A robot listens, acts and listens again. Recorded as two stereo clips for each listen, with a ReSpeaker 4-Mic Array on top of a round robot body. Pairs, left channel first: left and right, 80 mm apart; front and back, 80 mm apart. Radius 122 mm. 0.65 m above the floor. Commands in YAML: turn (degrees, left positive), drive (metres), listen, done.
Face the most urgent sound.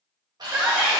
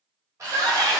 turn: -170
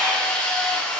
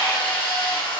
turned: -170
listen: true
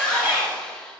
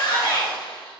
turn: -30
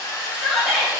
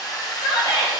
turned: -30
done: "Found it: a shout, straight ahead."